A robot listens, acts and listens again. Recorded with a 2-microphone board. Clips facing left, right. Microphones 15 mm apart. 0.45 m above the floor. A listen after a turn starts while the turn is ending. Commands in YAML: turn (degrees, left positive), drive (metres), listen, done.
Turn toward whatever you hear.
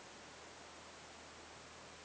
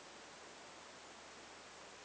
listen: true
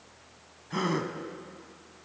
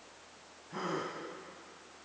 turn: 50
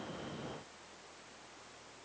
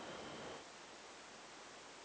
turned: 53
listen: true
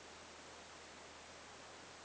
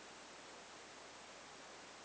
done: "I heard a gasp, but can't make it out now. It was about straight ahead or 75° left."